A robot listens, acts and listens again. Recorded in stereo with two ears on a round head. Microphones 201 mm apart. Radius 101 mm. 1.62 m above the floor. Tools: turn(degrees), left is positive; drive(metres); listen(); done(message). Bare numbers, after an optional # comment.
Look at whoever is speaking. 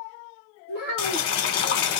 # The child speaking: about 45° right or 135° right.
turn(-45)
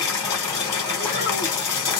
listen()
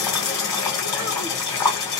listen()
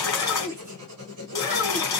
# So it is at 10° right.
turn(-10)
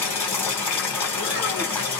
listen()
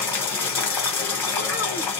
listen()
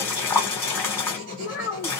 done("Found it: a child speaking, straight ahead.")